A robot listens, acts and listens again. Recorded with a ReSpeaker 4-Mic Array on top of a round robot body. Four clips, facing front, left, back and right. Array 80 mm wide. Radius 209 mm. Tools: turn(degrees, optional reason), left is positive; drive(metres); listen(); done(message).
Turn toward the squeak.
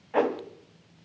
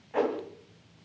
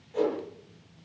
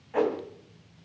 listen()
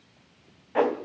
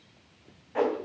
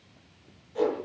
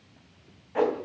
listen()
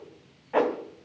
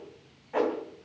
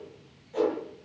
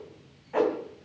done("I can't make out a squeak to turn to.")